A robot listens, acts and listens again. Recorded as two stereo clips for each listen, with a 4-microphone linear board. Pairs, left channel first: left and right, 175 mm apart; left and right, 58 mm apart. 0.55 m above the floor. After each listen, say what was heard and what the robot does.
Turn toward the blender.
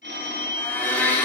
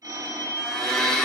Turn 30° left.
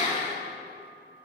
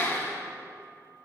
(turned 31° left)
So it is at 140° left. Turn 140° left.
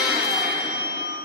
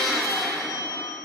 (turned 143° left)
Facing the blender, 1 to 2 m away.